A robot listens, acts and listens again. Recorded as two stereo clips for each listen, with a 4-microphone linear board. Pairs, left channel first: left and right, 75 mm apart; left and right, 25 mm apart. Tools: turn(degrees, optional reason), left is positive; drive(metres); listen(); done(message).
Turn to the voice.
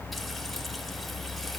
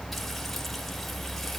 listen()
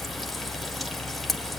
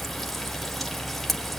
listen()
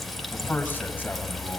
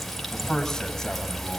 turn(degrees=20, reason="The man speaking: about 20° left or 160° left.")
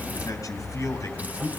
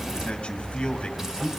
turn(degrees=135, reason="So it is at 135° left.")
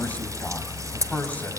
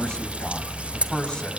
turn(degrees=25, reason="The man speaking is now 25° left.")
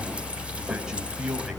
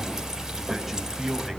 done("Facing the man speaking.")